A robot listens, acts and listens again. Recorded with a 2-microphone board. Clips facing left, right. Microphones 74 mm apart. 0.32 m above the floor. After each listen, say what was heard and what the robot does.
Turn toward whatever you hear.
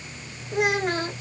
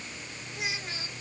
The child speaking: about 55° left or 125° left. Turn 55° left.
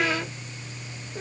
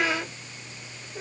Facing the child speaking.